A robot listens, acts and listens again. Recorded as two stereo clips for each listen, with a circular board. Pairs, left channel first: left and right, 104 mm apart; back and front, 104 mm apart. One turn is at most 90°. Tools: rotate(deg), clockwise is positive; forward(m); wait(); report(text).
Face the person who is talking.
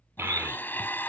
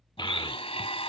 rotate(90)
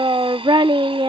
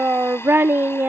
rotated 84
rotate(65)
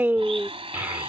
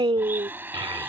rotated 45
rotate(20)
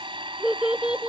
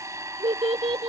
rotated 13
rotate(10)
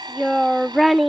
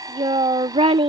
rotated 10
report("Found it: a child speaking, straight ahead.")